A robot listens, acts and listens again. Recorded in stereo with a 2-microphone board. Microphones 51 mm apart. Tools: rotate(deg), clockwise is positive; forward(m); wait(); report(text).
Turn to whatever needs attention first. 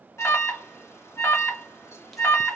rotate(-75)
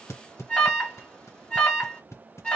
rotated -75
rotate(-25)
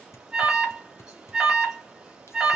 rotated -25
rotate(10)
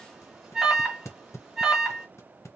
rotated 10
report("Facing the alarm, 1 to 2 m away.")